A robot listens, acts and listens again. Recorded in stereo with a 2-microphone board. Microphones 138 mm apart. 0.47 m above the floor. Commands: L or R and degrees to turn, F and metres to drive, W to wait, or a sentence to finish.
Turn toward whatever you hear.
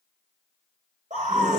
R55
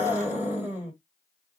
R20
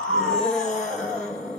Found it: a scream, straight ahead.